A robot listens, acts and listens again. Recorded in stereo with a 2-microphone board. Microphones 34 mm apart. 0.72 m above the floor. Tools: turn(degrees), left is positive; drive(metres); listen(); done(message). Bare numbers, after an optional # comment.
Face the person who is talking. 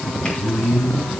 # The man speaking: about 65° left or 115° left.
turn(65)
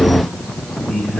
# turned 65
# So it is at 45° left.
turn(45)
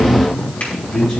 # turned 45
done("Facing the man speaking, over 4 m away.")